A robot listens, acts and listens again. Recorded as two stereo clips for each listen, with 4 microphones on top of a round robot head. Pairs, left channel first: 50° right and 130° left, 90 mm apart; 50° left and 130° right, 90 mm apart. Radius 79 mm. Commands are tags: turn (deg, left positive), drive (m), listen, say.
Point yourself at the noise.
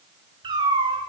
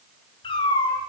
<turn deg="95"/>
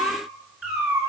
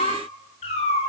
<turn deg="60"/>
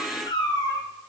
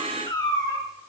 <say>Facing the cat meowing.</say>